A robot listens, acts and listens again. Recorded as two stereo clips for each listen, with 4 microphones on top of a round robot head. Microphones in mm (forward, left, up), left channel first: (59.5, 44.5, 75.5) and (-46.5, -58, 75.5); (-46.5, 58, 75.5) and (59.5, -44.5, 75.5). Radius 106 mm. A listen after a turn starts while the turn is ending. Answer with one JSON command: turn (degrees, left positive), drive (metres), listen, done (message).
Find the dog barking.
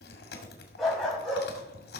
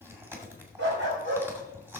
{"turn": -45}
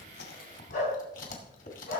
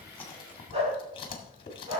{"turn": 10}
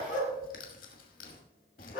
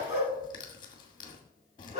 {"turn": 10}
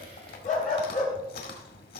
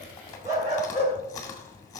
{"done": "Facing the dog barking."}